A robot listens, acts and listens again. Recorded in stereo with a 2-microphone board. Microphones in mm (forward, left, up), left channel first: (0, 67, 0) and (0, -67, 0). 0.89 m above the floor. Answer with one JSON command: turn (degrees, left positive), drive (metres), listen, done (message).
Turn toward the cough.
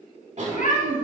{"turn": -55}
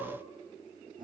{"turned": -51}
{"turn": -70}
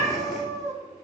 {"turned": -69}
{"listen": true}
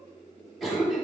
{"done": "Facing the cough."}